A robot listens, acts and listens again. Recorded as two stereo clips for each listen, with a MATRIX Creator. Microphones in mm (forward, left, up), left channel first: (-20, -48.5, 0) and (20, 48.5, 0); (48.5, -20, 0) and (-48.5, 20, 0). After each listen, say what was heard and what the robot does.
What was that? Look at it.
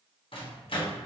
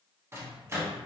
The microwave: 140° right. Turn 140° right.
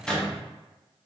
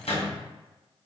The microwave is now 30° right. Turn 30° right.
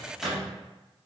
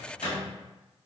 The microwave is now 25° right. Turn 25° right.
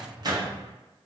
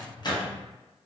The microwave is now 20° left. Turn 20° left.
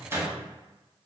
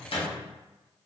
Facing the microwave.